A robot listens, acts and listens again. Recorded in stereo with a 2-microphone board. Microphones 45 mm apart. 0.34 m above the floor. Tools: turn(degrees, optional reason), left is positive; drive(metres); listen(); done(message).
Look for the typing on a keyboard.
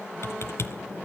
turn(degrees=70, reason="The typing on a keyboard: about 70° left or 110° left.")
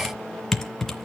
turn(degrees=10, reason="So it is at 10° left.")
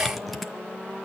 done("Facing the typing on a keyboard, 2 to 4 m away.")